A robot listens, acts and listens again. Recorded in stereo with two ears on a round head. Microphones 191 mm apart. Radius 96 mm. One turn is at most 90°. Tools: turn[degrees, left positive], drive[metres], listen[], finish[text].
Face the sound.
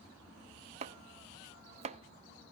Thought: The chopping: about 30° right or 150° right.
Action: turn[-30]
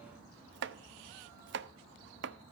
Thought: So it is at 120° right.
Action: turn[-90]
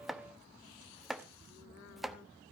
Action: finish[Facing the chopping, under 1 m away.]